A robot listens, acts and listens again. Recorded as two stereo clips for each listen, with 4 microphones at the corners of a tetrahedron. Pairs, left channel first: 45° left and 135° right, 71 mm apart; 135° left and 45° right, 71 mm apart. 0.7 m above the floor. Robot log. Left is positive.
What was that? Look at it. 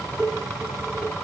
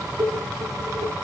note: The dishes clattering: 35° right.
cmd yaw -35
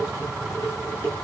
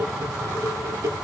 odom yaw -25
note: The dishes clattering is now 10° right.
cmd yaw -10
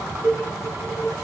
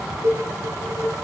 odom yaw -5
end: Found it: dishes clattering, straight ahead.